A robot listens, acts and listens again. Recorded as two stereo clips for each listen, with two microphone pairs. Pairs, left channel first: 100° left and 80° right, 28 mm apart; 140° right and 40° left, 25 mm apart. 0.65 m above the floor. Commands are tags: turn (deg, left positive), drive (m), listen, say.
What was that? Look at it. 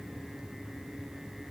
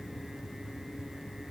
<listen/>
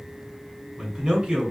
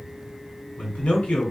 <turn deg="-125"/>
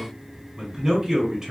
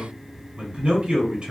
<say>Facing the man speaking, 1 to 2 m away.</say>